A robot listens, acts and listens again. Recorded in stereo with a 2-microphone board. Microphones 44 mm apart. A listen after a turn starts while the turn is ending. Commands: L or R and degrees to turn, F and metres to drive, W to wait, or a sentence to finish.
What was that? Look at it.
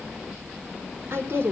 R60
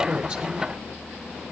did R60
W
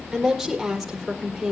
Found it: a woman speaking, straight ahead.